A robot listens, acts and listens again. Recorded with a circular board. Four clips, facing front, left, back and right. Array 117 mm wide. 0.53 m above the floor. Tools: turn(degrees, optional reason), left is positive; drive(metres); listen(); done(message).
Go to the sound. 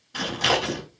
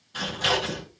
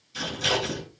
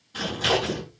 drive(metres=1.0)
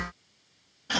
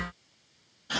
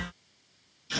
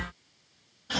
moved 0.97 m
drive(metres=1.0)
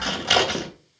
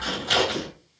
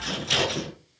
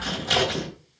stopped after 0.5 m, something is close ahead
done("Blocked. The scissors is further on, straight ahead.")